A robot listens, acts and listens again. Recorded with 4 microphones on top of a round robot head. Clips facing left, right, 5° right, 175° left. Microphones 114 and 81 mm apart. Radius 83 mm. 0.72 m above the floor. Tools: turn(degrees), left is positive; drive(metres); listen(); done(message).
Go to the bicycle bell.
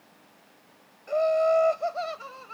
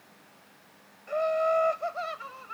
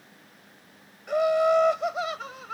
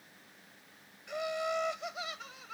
listen()
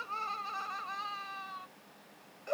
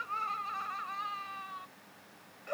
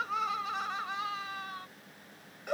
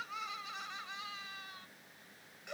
listen()
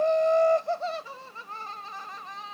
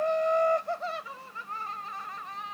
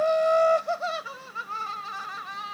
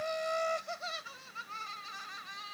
done("I can't make out a bicycle bell to turn to.")